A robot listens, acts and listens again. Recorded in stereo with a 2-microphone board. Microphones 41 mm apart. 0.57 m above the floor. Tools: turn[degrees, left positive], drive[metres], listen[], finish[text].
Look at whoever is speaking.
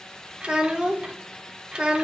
Thought: The child speaking: about 25° right or 155° right.
Action: turn[-25]
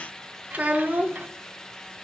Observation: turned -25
Thought: So it is at 130° right.
Action: turn[-130]
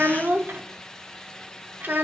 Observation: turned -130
Thought: The child speaking is now 60° right.
Action: turn[-60]
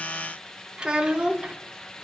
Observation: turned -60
Thought: The child speaking is now 25° right.
Action: turn[-25]
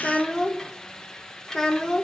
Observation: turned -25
Thought: The child speaking is now 20° left.
Action: turn[20]
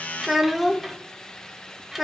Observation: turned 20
Action: finish[Found it: a child speaking, straight ahead, under 1 m away.]